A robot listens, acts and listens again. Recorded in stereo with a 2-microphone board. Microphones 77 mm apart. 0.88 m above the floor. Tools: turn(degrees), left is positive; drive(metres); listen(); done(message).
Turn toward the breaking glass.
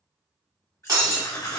turn(degrees=-60)
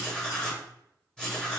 listen()
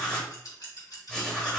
done("I heard breaking glass, but can't make it out now. It was about straight ahead or 60° right.")